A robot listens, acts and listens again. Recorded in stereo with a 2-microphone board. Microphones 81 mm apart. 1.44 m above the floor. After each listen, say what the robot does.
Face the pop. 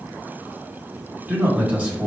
Keep listening.
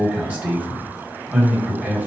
Keep listening.
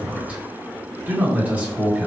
I can't make out a pop, only a man speaking.